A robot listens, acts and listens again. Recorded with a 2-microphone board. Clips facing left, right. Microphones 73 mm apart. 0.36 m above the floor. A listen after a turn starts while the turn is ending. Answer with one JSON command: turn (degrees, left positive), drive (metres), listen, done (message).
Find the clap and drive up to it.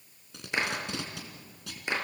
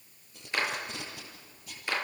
{"turn": 20}
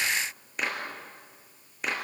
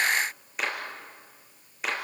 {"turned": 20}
{"drive": 1.0}
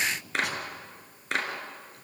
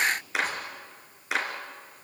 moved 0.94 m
{"drive": 1.0}
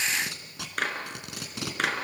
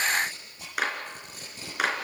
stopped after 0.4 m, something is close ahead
{"turn": -10}
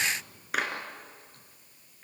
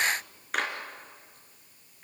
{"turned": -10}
{"done": "Something is in my way. I am facing the clap but have not reached it."}